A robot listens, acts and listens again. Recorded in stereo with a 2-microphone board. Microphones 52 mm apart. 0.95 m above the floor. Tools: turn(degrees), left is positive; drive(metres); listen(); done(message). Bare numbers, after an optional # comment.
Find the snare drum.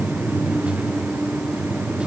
listen()
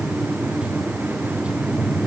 listen()
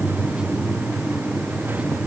done("I can't make out a snare drum to turn to.")